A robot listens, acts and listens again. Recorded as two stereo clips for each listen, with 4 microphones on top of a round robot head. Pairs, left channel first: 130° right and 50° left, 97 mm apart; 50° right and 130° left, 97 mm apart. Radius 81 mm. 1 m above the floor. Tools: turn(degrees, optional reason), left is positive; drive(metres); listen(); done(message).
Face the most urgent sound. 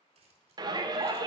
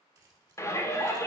turn(degrees=10, reason="The shout: 10° left.")
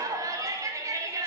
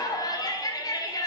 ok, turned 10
done("Found it: a shout, straight ahead.")